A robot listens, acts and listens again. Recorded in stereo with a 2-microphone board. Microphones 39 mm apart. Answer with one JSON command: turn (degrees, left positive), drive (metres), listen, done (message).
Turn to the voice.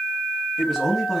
{"turn": -30}
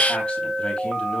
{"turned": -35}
{"listen": true}
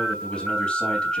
{"turn": 30}
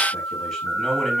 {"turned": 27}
{"done": "Found it: a man speaking, straight ahead."}